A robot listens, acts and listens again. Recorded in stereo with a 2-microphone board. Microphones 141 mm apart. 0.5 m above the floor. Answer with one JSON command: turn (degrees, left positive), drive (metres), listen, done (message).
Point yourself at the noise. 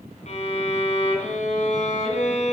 {"turn": 55}
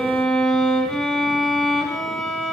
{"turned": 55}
{"done": "Found it: a violin, straight ahead."}